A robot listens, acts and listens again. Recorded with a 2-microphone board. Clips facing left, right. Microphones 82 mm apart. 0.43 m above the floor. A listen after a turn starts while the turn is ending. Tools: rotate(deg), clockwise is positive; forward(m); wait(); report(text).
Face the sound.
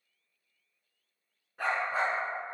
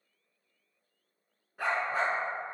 rotate(-30)
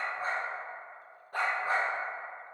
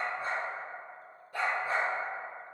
rotate(-115)
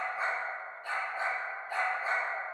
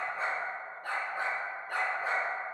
rotate(65)
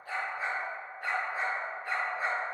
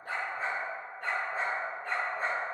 report("Found it: a dog barking, straight ahead.")